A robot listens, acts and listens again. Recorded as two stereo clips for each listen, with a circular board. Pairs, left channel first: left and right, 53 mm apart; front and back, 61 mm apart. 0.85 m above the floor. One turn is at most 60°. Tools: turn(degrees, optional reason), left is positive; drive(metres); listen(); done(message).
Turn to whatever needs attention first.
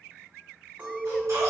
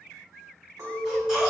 turn(degrees=-60, reason="The baby crying: 100° right.")
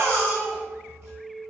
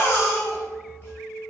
turn(degrees=-50, reason="The baby crying is now 50° right.")
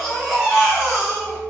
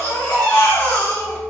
turn(degrees=-10, reason="The baby crying is now 10° right.")
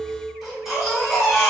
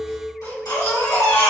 done("Found it: a baby crying, straight ahead.")